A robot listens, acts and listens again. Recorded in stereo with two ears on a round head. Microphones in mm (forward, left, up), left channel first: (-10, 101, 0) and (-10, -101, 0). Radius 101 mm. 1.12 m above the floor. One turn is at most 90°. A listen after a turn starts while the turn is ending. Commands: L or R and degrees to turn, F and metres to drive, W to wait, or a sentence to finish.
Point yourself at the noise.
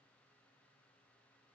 W
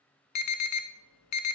L90
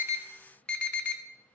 Found it: an alarm, straight ahead.